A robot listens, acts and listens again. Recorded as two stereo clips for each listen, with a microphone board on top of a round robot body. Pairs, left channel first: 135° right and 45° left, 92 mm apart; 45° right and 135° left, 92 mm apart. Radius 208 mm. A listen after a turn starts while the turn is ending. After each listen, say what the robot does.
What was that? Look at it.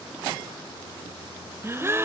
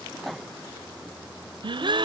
Turn 105° left.
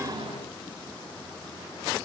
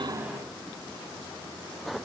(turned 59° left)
Turn 50° left.
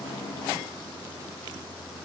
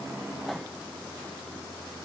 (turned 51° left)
I heard a gasp from this way, but can't make it out now.